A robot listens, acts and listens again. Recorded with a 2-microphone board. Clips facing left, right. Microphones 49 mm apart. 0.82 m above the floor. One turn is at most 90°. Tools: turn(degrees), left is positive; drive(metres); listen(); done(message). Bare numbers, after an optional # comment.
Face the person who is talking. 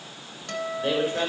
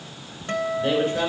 turn(30)
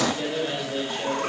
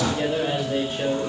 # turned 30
# So it is at 15° right.
turn(-15)
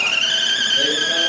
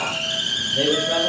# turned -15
listen()
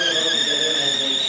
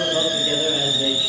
listen()
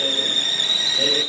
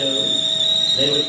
done("Facing where the man speaking came from. I can't hear it now.")